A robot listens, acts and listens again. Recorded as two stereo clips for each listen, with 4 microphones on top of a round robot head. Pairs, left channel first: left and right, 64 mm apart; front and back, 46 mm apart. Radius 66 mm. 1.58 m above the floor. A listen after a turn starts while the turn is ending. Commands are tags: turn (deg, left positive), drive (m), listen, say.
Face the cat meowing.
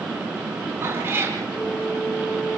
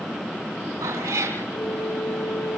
<turn deg="-150"/>
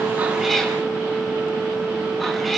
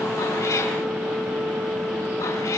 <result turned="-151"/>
<listen/>
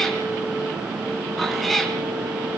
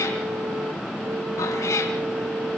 <say>Found it: a cat meowing, straight ahead.</say>